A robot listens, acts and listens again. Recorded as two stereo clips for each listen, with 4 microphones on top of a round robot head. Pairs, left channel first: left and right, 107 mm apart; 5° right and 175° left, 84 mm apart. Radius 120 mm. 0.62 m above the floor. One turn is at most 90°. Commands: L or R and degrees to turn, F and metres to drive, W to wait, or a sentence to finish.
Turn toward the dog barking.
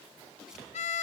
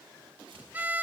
W
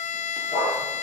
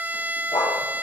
L40
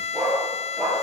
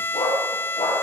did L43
Found it: a dog barking, straight ahead.